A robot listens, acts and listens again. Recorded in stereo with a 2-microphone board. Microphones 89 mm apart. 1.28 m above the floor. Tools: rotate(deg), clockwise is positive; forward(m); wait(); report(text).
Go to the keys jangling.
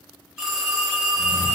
rotate(65)
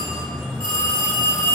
forward(1.0)
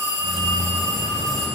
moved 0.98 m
forward(1.0)
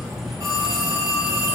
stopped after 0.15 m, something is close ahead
report("Arrived at the keys jangling, straight ahead.")